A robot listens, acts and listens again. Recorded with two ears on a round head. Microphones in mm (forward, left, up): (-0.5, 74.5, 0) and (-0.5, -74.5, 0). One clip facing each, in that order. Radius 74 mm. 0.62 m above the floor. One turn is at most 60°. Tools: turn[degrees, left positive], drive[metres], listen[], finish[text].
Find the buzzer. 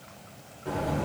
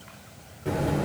Thought: The buzzer: about 30° right or 150° right.
Action: turn[-30]
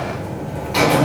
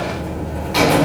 Action: finish[Facing the buzzer.]